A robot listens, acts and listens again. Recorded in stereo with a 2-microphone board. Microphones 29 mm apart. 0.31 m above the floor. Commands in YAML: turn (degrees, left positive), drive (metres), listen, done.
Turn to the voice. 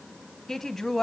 turn: 30
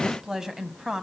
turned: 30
turn: -20
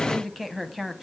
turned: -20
done: "Found it: a woman speaking, straight ahead."